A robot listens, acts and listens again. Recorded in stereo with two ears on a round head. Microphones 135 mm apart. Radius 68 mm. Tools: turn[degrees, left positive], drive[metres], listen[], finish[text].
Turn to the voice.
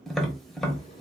Action: listen[]
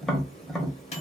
Action: listen[]
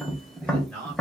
Action: turn[30]
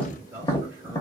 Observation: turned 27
Thought: So it is at 20° right.
Action: turn[-20]
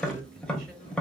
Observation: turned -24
Action: listen[]
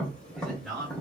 Action: finish[Found it: a man speaking, straight ahead.]